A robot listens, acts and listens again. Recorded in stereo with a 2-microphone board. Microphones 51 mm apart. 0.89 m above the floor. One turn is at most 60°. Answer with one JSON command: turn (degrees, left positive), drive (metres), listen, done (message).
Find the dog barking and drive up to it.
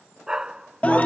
{"turn": -30}
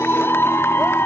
{"listen": true}
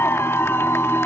{"listen": true}
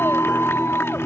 {"done": "I heard a dog barking, but can't make it out now. It was about 15° left or 135° right. I did not reach it."}